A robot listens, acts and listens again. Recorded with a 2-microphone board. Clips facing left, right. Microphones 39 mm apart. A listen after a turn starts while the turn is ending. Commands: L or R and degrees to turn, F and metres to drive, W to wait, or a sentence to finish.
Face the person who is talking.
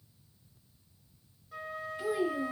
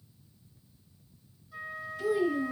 L20
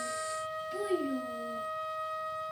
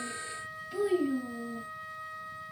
Found it: a child speaking, straight ahead, 1 to 2 m away.